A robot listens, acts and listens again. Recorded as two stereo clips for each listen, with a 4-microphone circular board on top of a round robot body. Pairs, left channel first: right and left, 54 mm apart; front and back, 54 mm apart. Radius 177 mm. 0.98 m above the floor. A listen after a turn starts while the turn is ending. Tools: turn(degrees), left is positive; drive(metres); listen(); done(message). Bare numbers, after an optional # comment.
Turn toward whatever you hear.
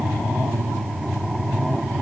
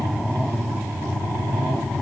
listen()
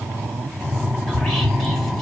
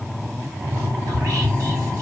# The whispering: straight behind.
turn(180)
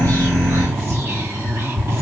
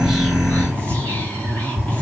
# The whispering is now 55° left.
turn(55)
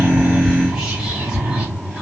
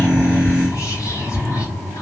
# The whispering is now 10° left.
turn(10)
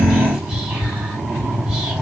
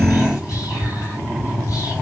done("Facing the whispering.")